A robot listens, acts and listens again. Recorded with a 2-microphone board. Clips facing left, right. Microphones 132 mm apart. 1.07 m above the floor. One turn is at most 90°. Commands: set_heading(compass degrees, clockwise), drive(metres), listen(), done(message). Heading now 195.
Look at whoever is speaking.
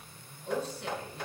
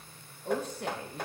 set_heading(245)
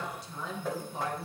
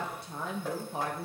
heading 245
set_heading(315)
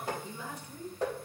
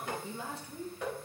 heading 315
set_heading(345)
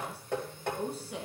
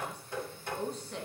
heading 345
set_heading(335)
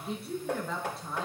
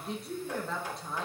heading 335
done("Found it: a woman speaking, straight ahead.")